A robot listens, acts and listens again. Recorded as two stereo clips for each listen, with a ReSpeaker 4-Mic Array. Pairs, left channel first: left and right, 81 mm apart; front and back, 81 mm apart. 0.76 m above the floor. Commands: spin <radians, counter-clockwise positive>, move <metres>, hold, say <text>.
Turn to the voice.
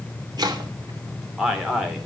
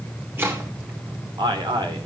spin -3.05
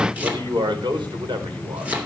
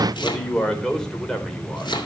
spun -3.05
spin -1.48
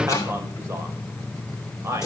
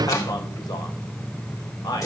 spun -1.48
spin -0.61
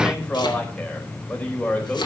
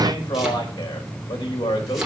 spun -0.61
spin 0.35
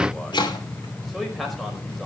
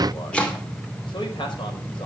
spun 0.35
hold
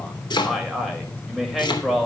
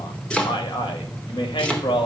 say Facing the man speaking, over 4 m away.